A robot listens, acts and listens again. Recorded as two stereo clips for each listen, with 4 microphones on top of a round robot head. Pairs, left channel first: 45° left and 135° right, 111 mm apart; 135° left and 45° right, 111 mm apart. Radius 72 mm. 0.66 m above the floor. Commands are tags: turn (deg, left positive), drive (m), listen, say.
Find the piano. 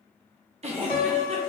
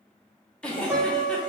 <turn deg="35"/>
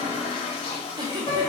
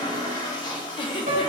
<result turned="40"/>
<say>Found it: a piano, straight ahead, under 1 m away.</say>